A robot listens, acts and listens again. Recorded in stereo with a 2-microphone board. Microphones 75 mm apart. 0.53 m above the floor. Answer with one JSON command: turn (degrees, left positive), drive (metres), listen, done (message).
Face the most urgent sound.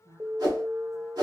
{"turn": -30}
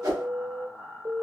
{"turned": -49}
{"turn": -95}
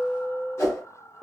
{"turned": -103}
{"done": "Found it: an alarm, straight ahead, 1 to 2 m away."}